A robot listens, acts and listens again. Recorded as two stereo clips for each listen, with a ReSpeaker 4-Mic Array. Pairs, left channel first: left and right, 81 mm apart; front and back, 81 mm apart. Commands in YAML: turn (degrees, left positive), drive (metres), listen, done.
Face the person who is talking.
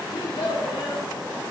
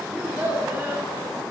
turn: 110
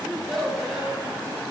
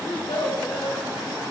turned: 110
done: "Found it: a child speaking, straight ahead."